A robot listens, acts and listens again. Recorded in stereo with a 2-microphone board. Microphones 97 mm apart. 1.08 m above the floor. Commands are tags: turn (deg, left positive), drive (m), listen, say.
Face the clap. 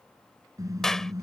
<turn deg="30"/>
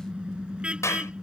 <turn deg="150"/>
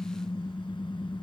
<turn deg="25"/>
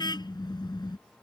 <turn deg="10"/>
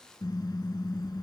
<listen/>
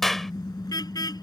<say>Found it: a clap, straight ahead.</say>